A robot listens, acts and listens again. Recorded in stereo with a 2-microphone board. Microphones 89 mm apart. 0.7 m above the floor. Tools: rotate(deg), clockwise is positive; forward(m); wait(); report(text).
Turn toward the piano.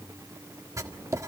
wait()
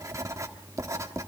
wait()
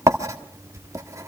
report("I can't make out a piano, only writing.")